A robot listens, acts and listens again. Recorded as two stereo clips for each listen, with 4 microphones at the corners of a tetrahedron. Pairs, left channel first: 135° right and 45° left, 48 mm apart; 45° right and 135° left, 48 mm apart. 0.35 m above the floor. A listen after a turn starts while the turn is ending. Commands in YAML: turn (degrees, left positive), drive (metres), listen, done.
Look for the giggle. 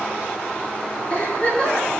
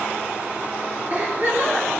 turn: 170
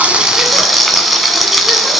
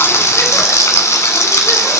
listen: true
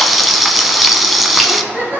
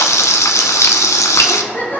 done: "Found it: a giggle, straight ahead, over 4 m away."